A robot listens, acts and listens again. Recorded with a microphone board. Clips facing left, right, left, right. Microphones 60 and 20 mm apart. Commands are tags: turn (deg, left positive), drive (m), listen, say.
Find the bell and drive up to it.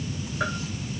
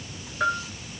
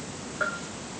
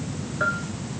<turn deg="-30"/>
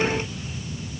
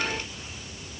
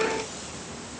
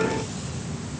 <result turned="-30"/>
<listen/>
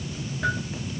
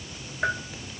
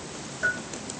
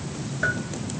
<turn deg="-150"/>
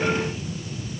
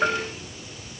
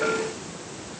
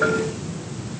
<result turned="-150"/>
<listen/>
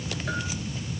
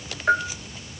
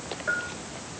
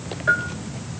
<turn deg="-40"/>
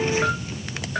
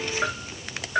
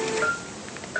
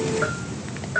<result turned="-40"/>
<drive m="1.0"/>
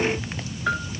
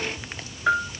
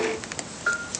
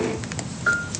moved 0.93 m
<turn deg="-10"/>
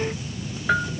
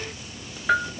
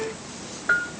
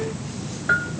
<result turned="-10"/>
<drive m="1.0"/>
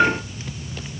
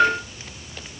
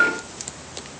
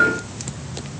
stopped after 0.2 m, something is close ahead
<say>Arrived at the bell, straight ahead.</say>